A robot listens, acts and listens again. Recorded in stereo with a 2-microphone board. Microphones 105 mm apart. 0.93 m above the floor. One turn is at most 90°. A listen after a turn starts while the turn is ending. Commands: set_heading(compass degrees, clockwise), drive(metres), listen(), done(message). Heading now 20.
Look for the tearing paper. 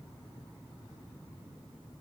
listen()
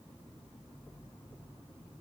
listen()
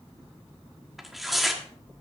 set_heading(350)
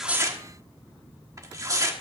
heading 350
set_heading(20)
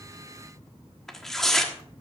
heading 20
done("Facing the tearing paper, 1 to 2 m away.")